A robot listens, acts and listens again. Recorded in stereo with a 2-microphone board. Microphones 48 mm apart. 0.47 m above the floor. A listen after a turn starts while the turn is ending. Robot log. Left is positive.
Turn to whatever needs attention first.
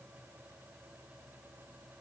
cmd idle
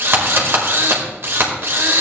cmd idle
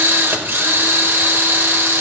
end: I can't make out anything urgent, only a drill.